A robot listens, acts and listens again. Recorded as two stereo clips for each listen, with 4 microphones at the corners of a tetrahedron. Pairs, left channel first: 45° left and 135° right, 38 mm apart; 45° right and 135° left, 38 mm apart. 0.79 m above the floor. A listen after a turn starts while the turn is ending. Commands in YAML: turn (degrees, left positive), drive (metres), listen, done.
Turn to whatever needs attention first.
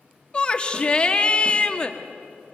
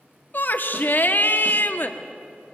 turn: -15
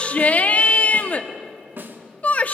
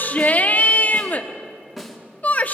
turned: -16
done: "Found it: a shout, straight ahead."